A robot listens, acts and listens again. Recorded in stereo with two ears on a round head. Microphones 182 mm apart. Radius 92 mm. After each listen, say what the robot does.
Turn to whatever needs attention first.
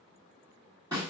Keep listening.
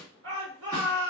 Turn 65° right.
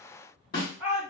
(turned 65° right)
Facing the shout, 1 to 2 m away.